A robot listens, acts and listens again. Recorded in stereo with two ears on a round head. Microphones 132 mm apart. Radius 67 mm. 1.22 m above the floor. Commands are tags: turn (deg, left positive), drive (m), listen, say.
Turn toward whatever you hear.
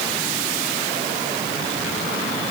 <listen/>
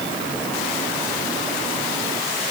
<listen/>
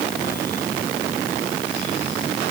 <say>I can't make out anything to turn to.</say>